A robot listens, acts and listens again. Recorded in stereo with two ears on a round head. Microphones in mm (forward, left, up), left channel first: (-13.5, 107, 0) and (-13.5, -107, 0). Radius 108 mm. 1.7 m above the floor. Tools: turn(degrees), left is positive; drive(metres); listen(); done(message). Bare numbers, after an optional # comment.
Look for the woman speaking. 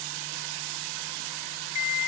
listen()
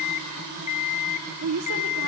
# The woman speaking: about 65° right or 115° right.
turn(-65)
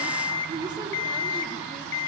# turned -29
# So it is at 15° right.
turn(-15)
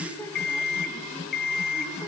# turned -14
listen()
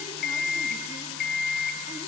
listen()
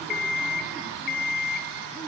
done("Facing where the woman speaking came from. I can't hear it now.")